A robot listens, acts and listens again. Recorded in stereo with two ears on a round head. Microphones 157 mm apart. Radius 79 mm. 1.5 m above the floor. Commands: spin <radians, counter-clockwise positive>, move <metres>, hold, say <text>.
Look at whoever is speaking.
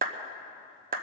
hold
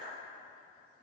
hold
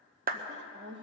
spin -1.22
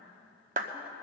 hold
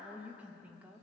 spin -0.17
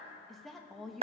say Found it: a woman speaking, straight ahead.